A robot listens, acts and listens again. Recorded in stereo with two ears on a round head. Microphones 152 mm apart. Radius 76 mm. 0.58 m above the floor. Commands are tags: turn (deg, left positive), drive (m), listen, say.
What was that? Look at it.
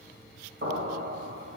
<turn deg="-65"/>
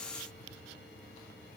<listen/>
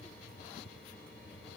<say>I heard an explosion, but can't make it out now. It was about straight ahead or 50° right.</say>